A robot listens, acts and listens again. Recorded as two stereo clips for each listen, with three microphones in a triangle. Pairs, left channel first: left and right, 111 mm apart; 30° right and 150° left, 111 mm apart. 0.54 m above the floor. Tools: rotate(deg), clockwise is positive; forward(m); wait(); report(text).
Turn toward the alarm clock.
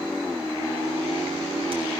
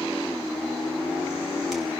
wait()
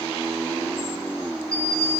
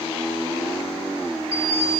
rotate(-125)
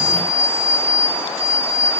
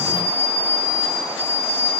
rotate(15)
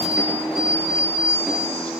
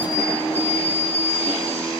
report("Found it: an alarm clock, straight ahead, over 4 m away.")